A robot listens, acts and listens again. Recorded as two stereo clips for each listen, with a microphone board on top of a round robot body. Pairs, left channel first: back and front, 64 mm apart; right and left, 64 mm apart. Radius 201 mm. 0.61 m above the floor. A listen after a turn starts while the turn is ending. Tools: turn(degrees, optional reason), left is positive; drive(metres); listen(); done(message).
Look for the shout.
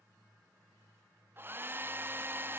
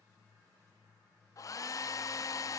listen()
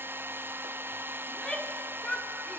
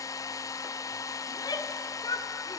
turn(degrees=-100, reason="The shout: 100° right.")
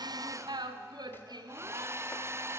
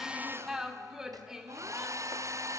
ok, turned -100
turn(degrees=10, reason="The shout is now 10° left.")
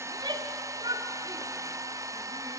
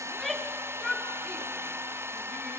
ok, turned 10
done("Found it: a shout, straight ahead.")